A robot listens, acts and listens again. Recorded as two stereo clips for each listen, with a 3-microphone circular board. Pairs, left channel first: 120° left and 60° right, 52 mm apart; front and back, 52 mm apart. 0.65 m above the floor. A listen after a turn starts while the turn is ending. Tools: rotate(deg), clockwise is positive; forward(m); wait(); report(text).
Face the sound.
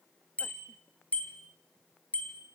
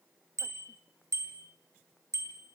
rotate(175)
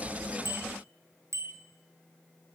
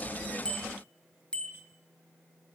rotate(70)
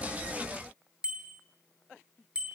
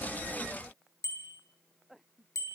rotate(-15)
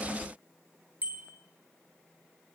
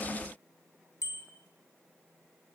report("Facing the bicycle bell, 2 to 4 m away.")